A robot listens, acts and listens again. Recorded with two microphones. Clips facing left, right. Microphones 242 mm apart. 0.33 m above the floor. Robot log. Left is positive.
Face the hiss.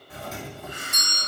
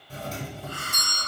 note: The hiss: about 20° left or 160° left.
cmd yaw +20
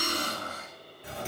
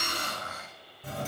note: So it is at 140° left.
cmd yaw +140
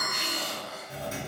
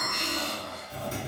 end: Found it: a hiss, straight ahead, under 1 m away.